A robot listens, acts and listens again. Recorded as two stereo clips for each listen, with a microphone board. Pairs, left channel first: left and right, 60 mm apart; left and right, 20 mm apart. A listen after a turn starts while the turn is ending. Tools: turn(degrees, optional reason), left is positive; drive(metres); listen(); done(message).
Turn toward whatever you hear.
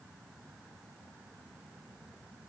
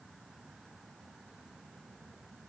listen()
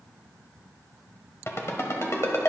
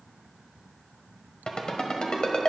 turn(degrees=50, reason="The ringtone: about 50° left or 130° left.")
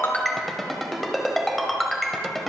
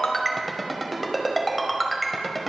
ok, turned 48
done("Found it: a ringtone, straight ahead.")